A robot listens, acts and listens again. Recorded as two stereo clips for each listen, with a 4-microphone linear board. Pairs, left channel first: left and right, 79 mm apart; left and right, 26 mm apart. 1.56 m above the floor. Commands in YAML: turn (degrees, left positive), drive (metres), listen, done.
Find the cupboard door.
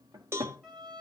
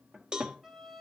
turn: -50
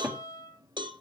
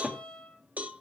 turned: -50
turn: -15
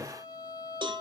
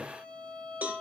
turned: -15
done: "Facing the cupboard door, 1 to 2 m away."